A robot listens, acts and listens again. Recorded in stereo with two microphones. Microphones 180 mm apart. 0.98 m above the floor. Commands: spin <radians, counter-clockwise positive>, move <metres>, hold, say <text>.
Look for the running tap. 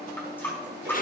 spin 0.52
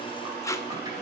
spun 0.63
hold
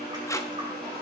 hold
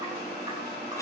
say I heard a running tap, but can't make it out now. It was about 25° right or 130° left.